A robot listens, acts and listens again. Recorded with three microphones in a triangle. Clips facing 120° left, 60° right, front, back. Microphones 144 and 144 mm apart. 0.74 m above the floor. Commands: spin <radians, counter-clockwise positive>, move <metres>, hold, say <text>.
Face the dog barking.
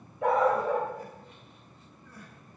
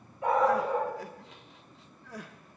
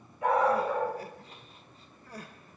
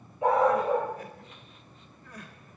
spin 2.01
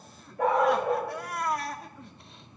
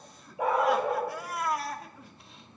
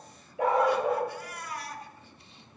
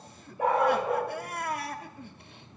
spin 0.35
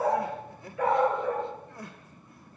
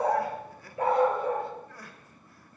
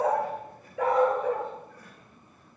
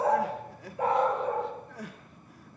say Found it: a dog barking, straight ahead, 2 to 4 m away.